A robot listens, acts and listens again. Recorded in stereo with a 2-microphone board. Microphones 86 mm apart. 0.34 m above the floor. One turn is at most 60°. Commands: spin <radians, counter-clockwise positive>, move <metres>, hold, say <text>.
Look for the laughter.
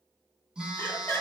spin 0.35
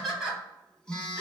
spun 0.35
say Facing the laughter.